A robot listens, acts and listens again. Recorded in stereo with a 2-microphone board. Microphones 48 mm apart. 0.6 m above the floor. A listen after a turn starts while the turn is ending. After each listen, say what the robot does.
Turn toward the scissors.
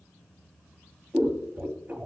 Turn 45° right.
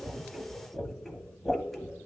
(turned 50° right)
Found it: scissors, straight ahead, under 1 m away.